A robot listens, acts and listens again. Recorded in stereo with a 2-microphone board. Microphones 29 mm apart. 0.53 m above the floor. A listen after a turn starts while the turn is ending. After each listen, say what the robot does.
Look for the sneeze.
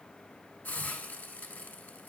Keep listening.
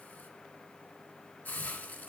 Keep listening.
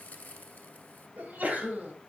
Turn 60° right.
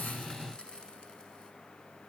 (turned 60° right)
Keep listening.
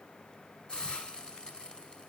I heard a sneeze, but can't make it out now. It was about straight ahead or 60° right.